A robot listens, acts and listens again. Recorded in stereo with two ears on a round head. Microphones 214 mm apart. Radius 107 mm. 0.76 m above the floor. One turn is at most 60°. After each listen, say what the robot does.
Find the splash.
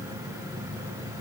Keep listening.
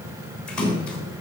Turn 30° left.
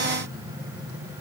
Keep listening.
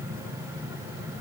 I heard a splash, but can't make it out now. It was about 25° right or 145° left.